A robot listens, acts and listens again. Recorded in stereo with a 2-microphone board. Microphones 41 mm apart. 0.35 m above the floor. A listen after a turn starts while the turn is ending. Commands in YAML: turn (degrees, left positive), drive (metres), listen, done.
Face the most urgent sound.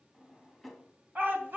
turn: -55
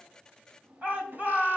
turn: -55
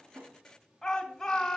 done: "Facing the shout."